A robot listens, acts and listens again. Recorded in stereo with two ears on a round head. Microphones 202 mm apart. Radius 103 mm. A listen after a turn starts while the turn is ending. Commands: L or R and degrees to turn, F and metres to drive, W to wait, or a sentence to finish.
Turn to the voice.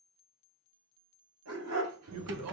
R70
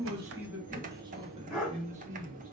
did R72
R30
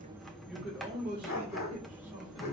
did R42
R10
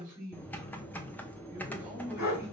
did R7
Found it: a man speaking, straight ahead.